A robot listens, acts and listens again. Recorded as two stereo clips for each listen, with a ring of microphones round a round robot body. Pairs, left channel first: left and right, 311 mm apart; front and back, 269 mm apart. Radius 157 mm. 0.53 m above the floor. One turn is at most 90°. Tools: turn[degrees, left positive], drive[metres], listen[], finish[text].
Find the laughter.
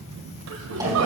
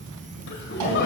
Thought: The laughter: 55° right.
Action: turn[-55]
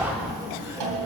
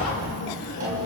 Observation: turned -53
Thought: The laughter is now 10° right.
Action: turn[-10]
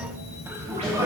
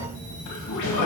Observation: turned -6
Thought: The laughter is now 10° right.
Action: turn[-10]
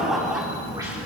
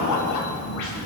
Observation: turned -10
Action: finish[Facing the laughter, 2 to 4 m away.]